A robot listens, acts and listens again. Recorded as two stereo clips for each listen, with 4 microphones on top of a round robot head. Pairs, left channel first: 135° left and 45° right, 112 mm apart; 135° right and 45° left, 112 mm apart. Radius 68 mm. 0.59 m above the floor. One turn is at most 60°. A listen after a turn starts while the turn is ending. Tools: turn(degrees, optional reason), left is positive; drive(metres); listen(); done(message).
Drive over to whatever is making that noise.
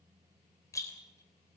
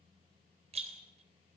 turn(degrees=60, reason="The rattle: 75° left.")
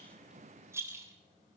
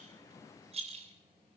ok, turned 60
turn(degrees=20, reason="The rattle is now 20° left.")
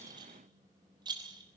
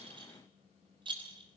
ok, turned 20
drive(metres=1.0)
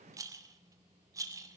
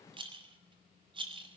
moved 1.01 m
turn(degrees=10, reason="The rattle is now 10° left.")
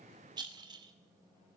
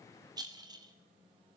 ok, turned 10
drive(metres=1.0)
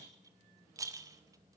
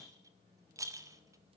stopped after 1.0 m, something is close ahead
done("Arrived at the rattle, straight ahead.")